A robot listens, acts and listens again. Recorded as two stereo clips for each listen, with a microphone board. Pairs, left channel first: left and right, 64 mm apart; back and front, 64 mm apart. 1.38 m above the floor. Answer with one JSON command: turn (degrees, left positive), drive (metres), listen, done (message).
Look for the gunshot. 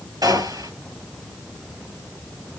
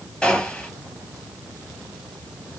{"turn": -105}
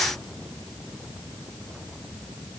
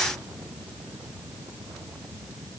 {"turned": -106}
{"done": "Facing where the gunshot came from. I can't hear it now."}